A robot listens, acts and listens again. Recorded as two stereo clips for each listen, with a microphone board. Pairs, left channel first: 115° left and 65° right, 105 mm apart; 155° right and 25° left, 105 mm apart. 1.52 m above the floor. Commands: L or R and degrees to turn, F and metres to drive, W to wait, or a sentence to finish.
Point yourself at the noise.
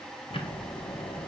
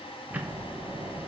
L95
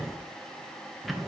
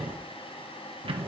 L25
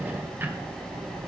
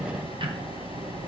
Found it: ticking, straight ahead.